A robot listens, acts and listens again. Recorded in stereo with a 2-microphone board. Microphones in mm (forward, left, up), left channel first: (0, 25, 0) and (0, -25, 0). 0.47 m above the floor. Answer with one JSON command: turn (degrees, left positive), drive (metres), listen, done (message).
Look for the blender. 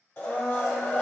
{"turn": 45}
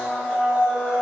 {"done": "Found it: a blender, straight ahead."}